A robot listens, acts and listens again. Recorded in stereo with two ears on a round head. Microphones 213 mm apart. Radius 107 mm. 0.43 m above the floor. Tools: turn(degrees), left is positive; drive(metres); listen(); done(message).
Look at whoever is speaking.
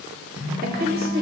turn(degrees=-40)
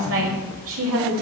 turn(degrees=-90)
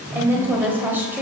turn(degrees=-10)
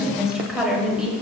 done("Found it: a woman speaking, straight ahead, 1 to 2 m away.")